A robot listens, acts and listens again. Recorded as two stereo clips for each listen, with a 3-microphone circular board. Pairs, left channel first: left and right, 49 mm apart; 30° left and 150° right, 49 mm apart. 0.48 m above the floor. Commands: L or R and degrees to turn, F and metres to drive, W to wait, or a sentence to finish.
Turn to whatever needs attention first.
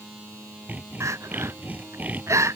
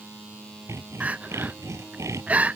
R90
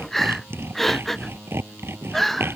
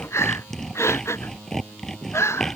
Found it: crying, straight ahead.